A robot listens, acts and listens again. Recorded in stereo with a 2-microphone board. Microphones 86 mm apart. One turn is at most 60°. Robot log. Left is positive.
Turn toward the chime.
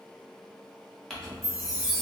note: The chime: about 40° left or 140° left.
cmd yaw +40
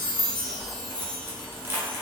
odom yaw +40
note: So it is at 95° left.
cmd yaw +60
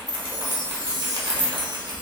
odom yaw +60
note: The chime is now 60° left.
cmd yaw +60
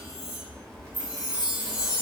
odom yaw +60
note: The chime is now 15° right.
cmd yaw -15
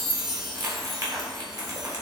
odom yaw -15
end: Facing the chime.